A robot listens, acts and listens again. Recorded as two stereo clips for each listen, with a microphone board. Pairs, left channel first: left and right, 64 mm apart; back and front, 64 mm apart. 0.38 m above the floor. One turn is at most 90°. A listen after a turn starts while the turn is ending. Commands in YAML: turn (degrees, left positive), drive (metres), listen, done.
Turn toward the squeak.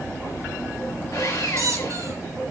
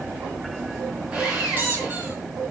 turn: -55
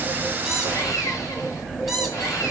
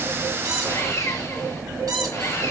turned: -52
done: "Found it: a squeak, straight ahead."